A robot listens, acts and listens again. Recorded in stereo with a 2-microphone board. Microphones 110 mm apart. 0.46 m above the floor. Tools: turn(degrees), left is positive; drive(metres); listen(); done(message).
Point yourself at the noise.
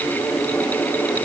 listen()
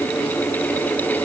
listen()
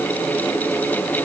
done("I can't make out anything to turn to.")